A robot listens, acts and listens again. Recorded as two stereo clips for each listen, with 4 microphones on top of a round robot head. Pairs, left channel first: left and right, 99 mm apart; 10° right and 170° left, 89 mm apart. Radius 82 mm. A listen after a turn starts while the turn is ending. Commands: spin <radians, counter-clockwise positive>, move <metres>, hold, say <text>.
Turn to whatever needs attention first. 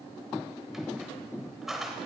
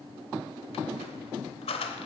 hold
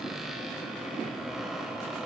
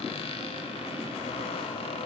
hold
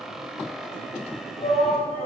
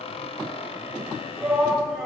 spin 1.48
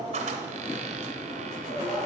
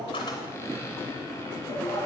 say Facing the shout, 2 to 4 m away.